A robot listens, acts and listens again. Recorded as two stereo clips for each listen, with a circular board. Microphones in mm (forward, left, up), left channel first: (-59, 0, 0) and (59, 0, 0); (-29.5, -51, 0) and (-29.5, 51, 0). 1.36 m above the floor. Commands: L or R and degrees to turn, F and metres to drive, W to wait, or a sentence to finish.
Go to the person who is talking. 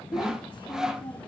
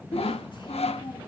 R130
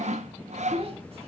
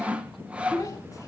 R35
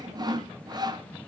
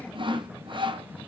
W
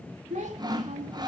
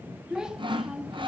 L10
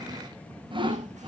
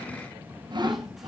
W
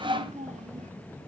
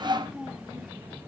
F1.0
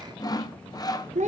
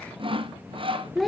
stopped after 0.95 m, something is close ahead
Arrived at the child speaking, straight ahead.